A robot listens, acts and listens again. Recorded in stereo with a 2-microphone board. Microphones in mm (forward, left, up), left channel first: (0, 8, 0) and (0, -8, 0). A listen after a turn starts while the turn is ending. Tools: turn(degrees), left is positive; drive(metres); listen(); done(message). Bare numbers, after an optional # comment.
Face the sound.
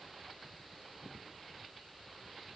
listen()
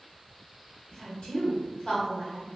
# The woman speaking: about 60° left or 120° left.
turn(60)
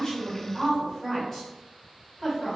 # So it is at 10° left.
turn(10)
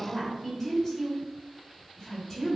done("Found it: a woman speaking, straight ahead.")